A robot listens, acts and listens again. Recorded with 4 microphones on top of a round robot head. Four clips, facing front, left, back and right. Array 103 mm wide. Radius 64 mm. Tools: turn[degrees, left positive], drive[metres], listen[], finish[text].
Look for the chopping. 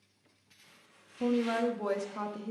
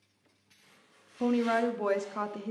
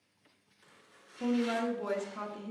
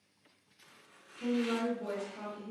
Thought: The chopping: 110° right.
Action: turn[-110]
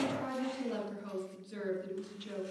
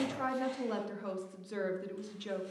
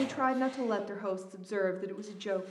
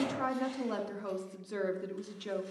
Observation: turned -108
Action: listen[]
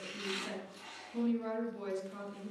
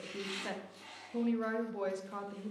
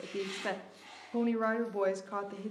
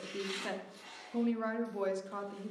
Action: finish[Found it: chopping, straight ahead, 2 to 4 m away.]